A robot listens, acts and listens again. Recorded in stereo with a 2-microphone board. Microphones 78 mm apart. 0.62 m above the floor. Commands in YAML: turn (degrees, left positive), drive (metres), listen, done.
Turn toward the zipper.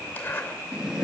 turn: 25
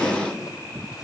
listen: true
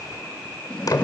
turn: 130
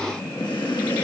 listen: true
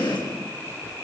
listen: true
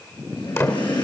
turn: 35
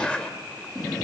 turn: 15
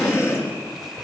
listen: true
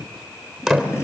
done: "Facing the zipper."